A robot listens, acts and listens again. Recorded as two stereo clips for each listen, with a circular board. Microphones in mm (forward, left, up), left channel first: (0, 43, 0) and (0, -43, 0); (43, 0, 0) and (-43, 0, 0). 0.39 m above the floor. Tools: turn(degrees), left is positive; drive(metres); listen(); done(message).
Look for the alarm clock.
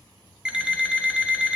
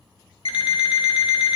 turn(degrees=-10)
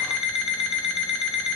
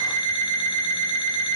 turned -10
done("Found it: an alarm clock, straight ahead.")